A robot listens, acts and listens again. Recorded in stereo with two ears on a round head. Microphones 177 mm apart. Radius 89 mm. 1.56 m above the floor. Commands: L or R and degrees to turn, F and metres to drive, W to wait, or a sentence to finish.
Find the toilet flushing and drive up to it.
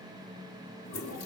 L70
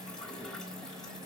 F1.0
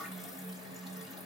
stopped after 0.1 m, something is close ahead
W
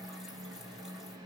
W
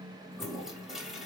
Blocked. The toilet flushing is further on, straight ahead.